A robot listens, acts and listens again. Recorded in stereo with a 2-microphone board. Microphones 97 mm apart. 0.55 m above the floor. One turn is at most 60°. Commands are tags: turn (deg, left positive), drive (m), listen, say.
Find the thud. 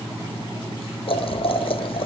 <listen/>
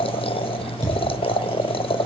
<turn deg="-40"/>
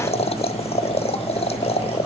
<listen/>
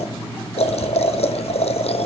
<say>I heard a thud, but can't make it out now. It was about straight ahead or 100° right.</say>